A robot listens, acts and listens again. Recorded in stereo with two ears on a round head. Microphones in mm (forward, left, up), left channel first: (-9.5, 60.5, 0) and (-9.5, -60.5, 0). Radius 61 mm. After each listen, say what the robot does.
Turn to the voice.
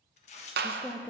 Turn 30° left.
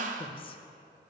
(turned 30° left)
Turn 135° left.
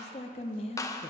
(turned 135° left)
Turn 50° left.
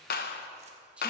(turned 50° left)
Turn 10° right.
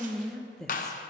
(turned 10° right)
Found it: a woman speaking, straight ahead.